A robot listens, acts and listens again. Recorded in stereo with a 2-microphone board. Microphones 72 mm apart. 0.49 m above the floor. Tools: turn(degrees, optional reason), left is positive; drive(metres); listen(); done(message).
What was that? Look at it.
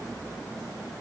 listen()
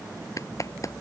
turn(degrees=45, reason="The clap: about 45° left or 135° left.")
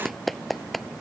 done("Facing the clap.")